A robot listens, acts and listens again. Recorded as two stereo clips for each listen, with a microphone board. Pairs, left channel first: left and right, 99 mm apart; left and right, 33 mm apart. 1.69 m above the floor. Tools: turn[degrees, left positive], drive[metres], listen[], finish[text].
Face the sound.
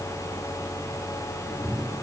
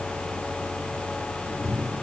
Action: turn[30]
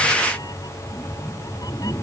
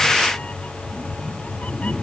Thought: So it is at 140° left.
Action: turn[140]
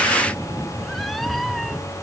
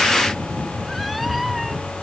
Action: finish[Found it: a cat meowing, straight ahead.]